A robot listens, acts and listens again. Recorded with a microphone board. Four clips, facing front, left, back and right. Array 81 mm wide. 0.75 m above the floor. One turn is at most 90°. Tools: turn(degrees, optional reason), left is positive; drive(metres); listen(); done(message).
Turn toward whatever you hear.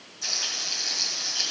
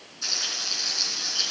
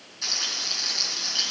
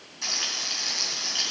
turn(degrees=-90, reason="The frying: 110° right.")
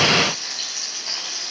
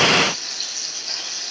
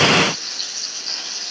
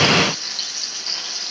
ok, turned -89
turn(degrees=-25, reason="The frying is now 25° right.")
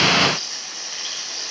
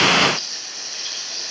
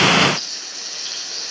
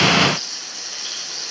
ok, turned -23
done("Facing the frying.")